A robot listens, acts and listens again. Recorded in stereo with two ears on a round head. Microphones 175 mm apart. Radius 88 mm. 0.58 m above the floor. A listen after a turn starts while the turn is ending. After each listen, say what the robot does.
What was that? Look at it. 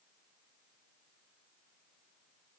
Keep listening.
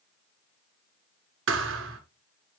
Turn 75° right.
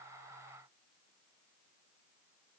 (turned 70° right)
Keep listening.
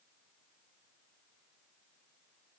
I heard a thud, but can't make it out now. It was about 5° right or 35° right.